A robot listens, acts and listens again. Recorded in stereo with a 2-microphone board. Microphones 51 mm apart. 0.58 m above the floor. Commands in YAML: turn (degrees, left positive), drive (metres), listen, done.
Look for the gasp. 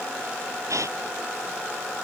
turn: -90
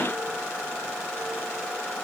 done: "I heard a gasp from this way, but can't make it out now."